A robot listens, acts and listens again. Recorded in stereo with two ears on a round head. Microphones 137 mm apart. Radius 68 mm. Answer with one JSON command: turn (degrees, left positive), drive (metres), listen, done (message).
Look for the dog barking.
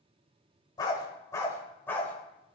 {"turn": 30}
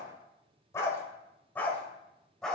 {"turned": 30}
{"turn": 30}
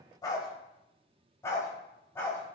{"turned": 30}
{"turn": 15}
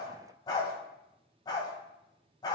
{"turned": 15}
{"turn": 25}
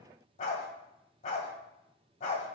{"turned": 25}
{"turn": 130}
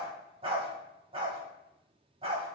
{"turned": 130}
{"turn": -35}
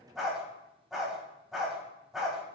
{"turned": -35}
{"done": "Facing the dog barking, 2 to 4 m away."}